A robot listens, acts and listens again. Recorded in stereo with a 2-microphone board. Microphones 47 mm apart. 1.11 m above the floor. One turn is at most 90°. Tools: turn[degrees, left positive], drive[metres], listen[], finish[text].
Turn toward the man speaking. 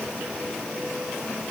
Action: listen[]
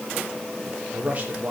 Thought: The man speaking: about 35° right or 145° right.
Action: turn[-35]
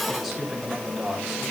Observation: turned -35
Action: finish[Facing the man speaking, over 4 m away.]